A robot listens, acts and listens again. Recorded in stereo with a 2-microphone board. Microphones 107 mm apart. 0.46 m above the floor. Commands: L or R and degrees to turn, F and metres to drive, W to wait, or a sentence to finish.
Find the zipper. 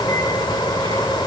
W
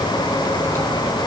W
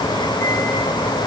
I can't make out a zipper.